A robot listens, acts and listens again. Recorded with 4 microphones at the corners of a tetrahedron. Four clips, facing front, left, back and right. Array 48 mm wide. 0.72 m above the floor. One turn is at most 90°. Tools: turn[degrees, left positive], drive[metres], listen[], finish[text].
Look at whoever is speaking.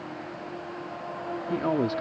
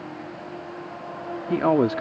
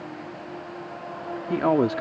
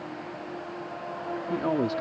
Thought: The man speaking: 130° left.
Action: turn[90]
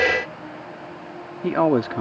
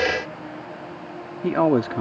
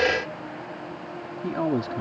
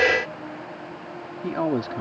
Thought: The man speaking is now 35° left.
Action: turn[35]
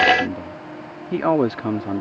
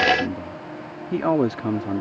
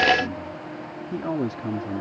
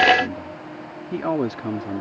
Thought: The man speaking is now 10° left.
Action: turn[10]
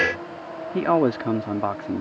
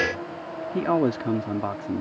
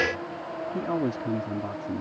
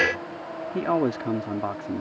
Action: finish[Facing the man speaking.]